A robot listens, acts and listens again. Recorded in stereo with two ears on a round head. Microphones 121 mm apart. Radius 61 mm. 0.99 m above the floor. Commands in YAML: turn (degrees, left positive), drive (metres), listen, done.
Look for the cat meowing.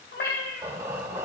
turn: 90
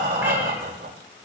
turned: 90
listen: true
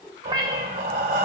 turn: -35
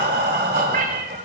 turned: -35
turn: -70
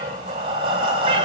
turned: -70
listen: true
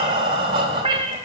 turn: -40
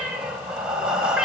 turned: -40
done: "Facing the cat meowing, 1 to 2 m away."